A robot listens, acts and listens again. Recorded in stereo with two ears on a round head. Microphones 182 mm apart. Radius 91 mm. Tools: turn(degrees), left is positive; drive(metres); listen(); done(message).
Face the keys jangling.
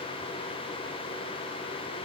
listen()
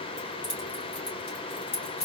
turn(degrees=35)
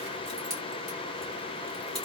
done("Found it: keys jangling, straight ahead, 1 to 2 m away.")